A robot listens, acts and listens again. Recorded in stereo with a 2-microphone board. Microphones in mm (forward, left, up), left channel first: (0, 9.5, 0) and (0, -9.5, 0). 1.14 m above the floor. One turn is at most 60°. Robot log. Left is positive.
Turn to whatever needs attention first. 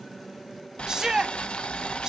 note: The shout: about 35° right or 145° right.
cmd yaw -35
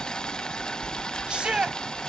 note: So it is at 100° right.
cmd yaw -60
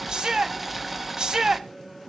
note: The shout is now 45° right.
cmd yaw -45
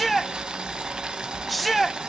end: Facing the shout.